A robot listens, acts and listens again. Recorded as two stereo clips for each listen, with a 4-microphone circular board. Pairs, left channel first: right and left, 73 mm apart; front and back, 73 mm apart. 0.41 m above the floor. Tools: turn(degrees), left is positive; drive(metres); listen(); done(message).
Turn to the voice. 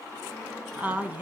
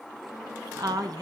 turn(degrees=155)
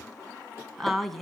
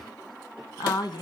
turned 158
done("Found it: a woman speaking, straight ahead.")